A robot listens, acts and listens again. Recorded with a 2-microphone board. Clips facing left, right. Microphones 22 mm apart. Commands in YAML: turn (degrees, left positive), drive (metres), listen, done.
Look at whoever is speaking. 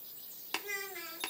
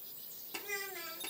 turn: 20
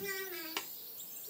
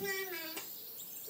done: "Facing the child speaking."